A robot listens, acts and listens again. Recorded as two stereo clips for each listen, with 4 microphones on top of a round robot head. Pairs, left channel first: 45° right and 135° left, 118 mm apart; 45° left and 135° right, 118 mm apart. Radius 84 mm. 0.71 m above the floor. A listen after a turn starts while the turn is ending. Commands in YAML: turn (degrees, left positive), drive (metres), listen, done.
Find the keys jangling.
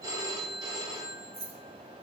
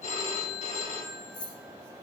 turn: 100
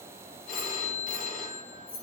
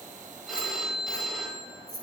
turn: -45
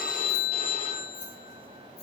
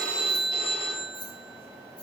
turn: -10
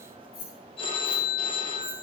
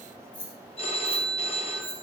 done: "Facing the keys jangling, over 4 m away."